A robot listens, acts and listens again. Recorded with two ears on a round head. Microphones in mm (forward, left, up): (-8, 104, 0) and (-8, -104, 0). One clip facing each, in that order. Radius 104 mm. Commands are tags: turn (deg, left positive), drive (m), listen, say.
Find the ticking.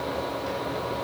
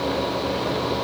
<listen/>
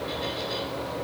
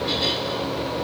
<listen/>
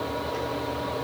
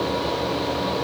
<say>I can't make out ticking to turn to.</say>